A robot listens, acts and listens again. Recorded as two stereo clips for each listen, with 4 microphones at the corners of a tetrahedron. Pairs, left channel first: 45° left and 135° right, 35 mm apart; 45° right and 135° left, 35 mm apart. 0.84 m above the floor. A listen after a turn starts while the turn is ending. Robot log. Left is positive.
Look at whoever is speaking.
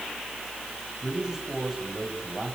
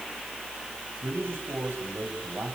note: The man speaking: 145° left.
cmd yaw +145
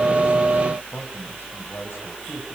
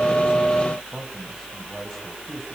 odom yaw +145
cmd idle
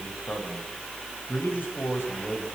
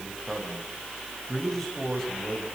note: The man speaking is now 40° left.
cmd yaw +40
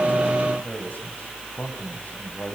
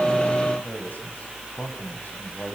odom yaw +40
end: Facing the man speaking.